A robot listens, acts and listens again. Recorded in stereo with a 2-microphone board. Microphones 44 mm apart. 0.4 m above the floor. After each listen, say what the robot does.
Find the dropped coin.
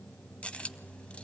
Turn 25° left.
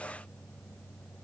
Keep listening.
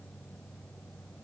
I heard a dropped coin, but can't make it out now. It was about straight ahead or 130° left.